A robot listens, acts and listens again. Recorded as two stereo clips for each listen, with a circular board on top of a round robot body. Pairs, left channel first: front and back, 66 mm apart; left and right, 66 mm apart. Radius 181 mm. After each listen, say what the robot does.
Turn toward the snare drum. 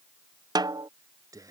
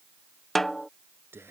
Turn 175° left.
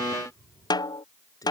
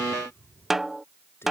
Found it: a snare drum, straight ahead.